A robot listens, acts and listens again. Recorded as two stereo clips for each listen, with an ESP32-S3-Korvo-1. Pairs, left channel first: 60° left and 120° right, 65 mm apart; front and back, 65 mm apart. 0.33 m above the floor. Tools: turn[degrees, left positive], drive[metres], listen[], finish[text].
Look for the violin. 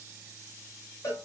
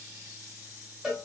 Action: listen[]
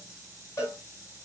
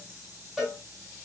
Action: listen[]
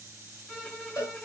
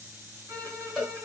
Thought: The violin: 135° left.
Action: turn[135]
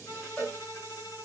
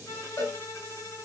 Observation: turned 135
Thought: The violin is now 30° left.
Action: turn[30]
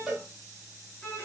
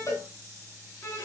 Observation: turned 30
Action: finish[Facing the violin, 2 to 4 m away.]